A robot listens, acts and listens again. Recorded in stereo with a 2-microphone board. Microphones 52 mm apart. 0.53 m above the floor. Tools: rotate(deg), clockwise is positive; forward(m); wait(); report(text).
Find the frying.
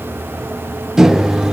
wait()
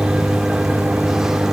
wait()
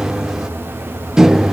report("I can't make out frying to turn to.")